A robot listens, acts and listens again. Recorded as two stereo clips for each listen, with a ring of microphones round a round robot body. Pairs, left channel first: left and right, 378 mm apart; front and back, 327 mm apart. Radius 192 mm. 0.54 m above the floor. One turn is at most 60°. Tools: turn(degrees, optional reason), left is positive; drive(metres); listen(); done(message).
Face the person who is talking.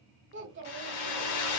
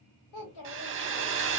turn(degrees=-30, reason="The child speaking: 30° right.")
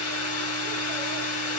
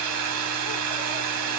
listen()
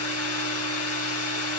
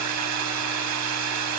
listen()
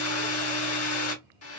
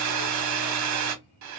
done("Facing where the child speaking came from. I can't hear it now.")